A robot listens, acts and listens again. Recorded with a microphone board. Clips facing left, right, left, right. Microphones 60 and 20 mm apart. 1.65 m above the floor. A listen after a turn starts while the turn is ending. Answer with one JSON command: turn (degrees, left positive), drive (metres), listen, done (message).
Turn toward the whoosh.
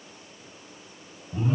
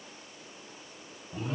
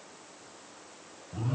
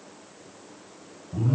{"listen": true}
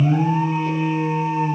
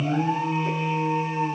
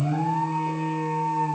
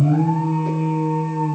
{"listen": true}
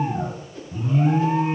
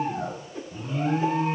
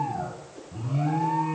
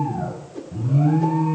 {"turn": -25}
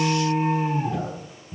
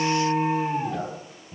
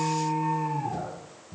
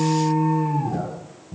{"listen": true}
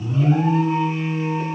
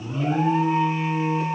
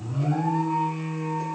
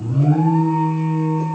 {"listen": true}
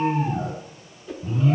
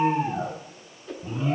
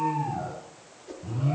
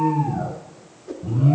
{"done": "Found it: a whoosh, straight ahead."}